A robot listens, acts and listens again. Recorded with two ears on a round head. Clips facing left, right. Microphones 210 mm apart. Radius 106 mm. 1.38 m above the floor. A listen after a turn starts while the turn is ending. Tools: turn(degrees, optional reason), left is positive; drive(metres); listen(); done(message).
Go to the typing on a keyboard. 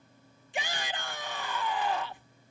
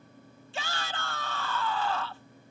listen()
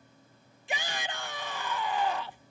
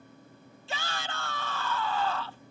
listen()
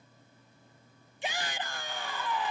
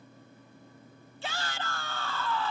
done("I can't make out typing on a keyboard, only a shout.")